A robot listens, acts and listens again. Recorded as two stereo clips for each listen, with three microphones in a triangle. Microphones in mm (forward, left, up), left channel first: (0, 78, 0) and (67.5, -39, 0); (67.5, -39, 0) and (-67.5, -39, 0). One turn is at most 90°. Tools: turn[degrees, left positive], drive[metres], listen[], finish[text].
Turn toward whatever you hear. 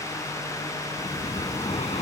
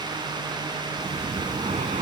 Thought: The breathing: 155° left.
Action: turn[90]
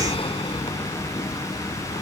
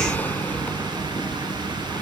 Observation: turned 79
Thought: The breathing is now 75° left.
Action: turn[75]
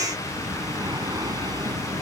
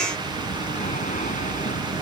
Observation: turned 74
Action: finish[Facing the breathing.]